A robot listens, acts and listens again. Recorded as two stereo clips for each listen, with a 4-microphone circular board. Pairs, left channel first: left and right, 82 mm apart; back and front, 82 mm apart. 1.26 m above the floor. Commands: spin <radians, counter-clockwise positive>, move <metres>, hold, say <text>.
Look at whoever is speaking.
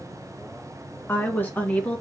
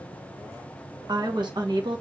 spin 0.35
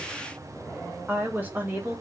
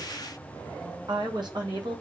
spin -0.52
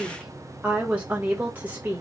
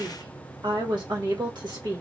spin -0.44
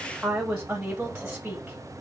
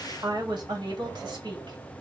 spin -0.26
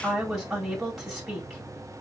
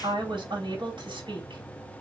say Found it: a woman speaking, straight ahead.